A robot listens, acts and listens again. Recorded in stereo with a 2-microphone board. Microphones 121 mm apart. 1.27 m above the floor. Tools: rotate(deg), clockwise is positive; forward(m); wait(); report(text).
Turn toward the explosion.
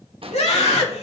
rotate(50)
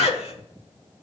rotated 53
wait()
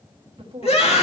report("I heard an explosion, but can't make it out now. It was about 5° left or 75° right.")